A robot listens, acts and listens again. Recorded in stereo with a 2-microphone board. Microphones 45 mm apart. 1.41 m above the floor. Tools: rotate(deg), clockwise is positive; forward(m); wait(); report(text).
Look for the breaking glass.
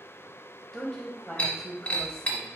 rotate(-25)
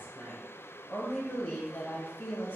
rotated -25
wait()
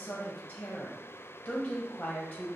report("I heard breaking glass, but can't make it out now. It was about straight ahead or 130° left.")